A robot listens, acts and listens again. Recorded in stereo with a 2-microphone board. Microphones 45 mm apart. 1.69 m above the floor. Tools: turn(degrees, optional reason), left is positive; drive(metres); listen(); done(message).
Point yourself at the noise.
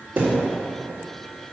turn(degrees=-35, reason="The thud: about 35° right or 145° right.")
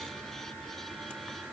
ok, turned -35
listen()
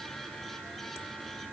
done("I heard a thud, but can't make it out now. It was about straight ahead or 110° right.")